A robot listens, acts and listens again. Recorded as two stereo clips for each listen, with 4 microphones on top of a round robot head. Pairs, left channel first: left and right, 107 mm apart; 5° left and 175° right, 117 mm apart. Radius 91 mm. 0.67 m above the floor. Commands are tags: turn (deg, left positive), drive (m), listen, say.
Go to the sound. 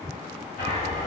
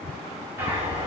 <turn deg="115"/>
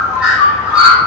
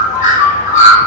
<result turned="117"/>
<drive m="1.0"/>
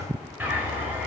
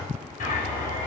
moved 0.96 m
<turn deg="-15"/>
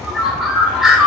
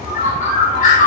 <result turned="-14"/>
<drive m="1.0"/>
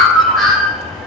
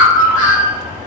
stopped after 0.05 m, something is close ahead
<say>I am next to the bird.</say>